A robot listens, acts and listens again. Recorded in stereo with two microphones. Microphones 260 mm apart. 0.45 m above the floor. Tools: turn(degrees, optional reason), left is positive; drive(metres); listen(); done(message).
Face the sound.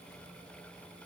listen()
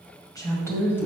turn(degrees=30)
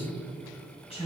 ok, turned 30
turn(degrees=155, reason="So it is at 155° left.")
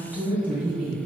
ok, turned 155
done("Facing the woman speaking.")